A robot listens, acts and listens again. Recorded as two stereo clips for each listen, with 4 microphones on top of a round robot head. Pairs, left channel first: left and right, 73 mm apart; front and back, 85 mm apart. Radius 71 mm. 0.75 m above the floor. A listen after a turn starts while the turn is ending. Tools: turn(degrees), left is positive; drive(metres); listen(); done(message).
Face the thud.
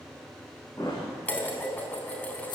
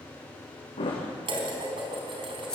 turn(degrees=25)
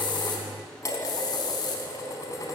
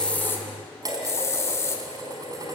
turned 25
done("Facing where the thud came from. I can't hear it now.")